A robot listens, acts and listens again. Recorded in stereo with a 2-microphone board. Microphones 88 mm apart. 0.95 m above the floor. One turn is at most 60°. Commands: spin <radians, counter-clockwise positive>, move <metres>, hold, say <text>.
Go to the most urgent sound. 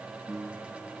hold
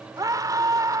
spin -0.79
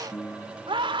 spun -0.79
spin -1.05
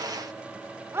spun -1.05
spin -0.52
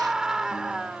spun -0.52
move 1.0
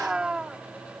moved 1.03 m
spin -0.17
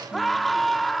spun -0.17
move 1.0
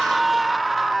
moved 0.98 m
move 1.0
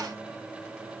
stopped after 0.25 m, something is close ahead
hold
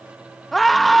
say Arrived at the scream, straight ahead.